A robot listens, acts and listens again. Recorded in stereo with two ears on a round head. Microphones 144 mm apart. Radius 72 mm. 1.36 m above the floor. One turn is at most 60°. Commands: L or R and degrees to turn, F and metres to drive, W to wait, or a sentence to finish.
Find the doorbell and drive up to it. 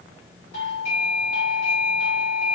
L50
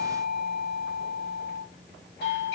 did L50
L60
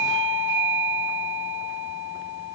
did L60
L35
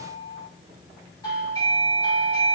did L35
L25
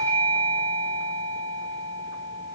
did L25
L15
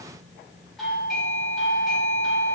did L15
F1.0
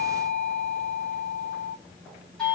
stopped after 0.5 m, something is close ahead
Something is in my way. I am facing the doorbell but have not reached it.